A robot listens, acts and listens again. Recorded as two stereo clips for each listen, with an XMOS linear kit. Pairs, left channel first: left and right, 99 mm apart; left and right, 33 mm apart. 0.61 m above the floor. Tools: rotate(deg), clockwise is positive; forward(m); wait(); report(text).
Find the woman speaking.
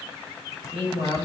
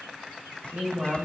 rotate(70)
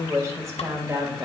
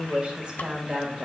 rotate(25)
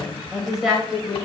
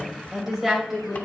report("Found it: a woman speaking, straight ahead, 2 to 4 m away.")